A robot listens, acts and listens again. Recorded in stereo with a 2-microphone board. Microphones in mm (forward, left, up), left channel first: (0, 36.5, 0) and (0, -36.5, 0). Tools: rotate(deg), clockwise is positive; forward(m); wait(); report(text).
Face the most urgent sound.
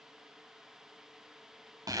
wait()
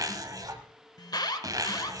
rotate(-70)
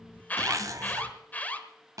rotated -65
rotate(-25)
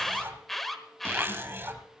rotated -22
report("Found it: an alarm, straight ahead, 1 to 2 m away.")